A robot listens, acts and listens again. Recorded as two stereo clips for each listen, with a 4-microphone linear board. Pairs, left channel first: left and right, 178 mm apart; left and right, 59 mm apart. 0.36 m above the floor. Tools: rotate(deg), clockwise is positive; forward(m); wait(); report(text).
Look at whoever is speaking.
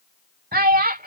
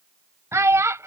rotate(55)
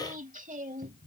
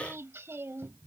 wait()
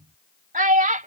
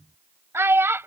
rotate(55)
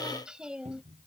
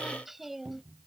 wait()
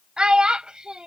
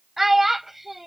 report("Facing the child speaking.")